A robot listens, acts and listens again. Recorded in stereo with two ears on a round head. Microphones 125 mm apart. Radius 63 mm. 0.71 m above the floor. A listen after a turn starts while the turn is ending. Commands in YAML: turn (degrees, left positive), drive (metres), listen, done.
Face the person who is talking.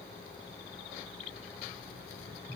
listen: true
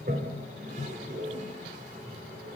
listen: true
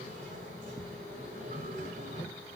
done: "I can't make out anyone speaking, only a toilet flushing."